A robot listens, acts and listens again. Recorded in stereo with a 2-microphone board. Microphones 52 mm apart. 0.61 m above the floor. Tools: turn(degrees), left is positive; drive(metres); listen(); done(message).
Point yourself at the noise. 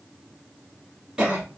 turn(degrees=-30)
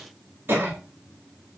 turn(degrees=-135)
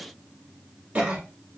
turn(degrees=-30)
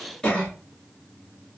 turn(degrees=15)
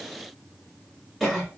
done("Facing the cough.")